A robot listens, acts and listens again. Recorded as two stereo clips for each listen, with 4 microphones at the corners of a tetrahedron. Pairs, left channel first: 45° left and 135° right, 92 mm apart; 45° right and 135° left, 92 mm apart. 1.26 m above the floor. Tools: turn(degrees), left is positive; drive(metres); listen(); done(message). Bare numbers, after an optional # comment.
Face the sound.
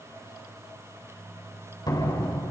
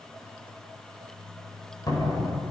done("Facing the door slam.")